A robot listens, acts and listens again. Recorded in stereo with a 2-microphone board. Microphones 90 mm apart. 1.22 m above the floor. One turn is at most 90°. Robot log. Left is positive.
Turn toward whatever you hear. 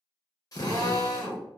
note: The drill: about 45° left or 135° left.
cmd yaw +45
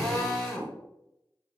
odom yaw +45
end: Found it: a drill, straight ahead, under 1 m away.